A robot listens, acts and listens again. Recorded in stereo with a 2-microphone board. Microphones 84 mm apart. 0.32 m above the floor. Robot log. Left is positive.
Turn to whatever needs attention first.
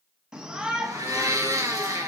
cmd yaw -30
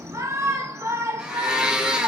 note: So it is at 135° right.
cmd yaw -135
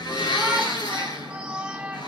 note: The shout is now 15° right.
cmd yaw -15
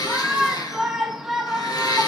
end: Facing the shout, 2 to 4 m away.